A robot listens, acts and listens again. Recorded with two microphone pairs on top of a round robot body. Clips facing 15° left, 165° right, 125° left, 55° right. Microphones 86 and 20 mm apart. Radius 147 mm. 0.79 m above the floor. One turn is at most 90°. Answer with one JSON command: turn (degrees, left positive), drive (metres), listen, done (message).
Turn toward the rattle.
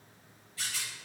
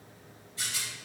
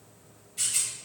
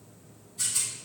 {"turn": 90}
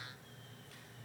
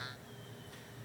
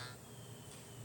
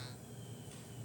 {"turn": 35}
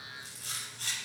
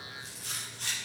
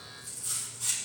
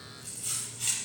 {"turn": -35}
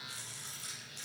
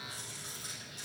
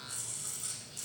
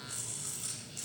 {"done": "Found it: a rattle, straight ahead, over 4 m away."}